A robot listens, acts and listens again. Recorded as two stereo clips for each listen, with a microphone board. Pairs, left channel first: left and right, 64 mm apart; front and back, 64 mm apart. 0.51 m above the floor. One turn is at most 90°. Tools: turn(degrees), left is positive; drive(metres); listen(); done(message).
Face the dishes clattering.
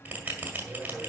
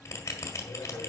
listen()
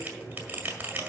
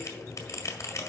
listen()
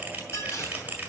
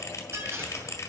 turn(degrees=90)
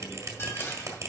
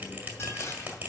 turn(degrees=40)
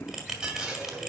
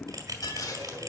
turn(degrees=-10)
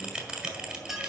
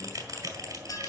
done("Facing the dishes clattering, 2 to 4 m away.")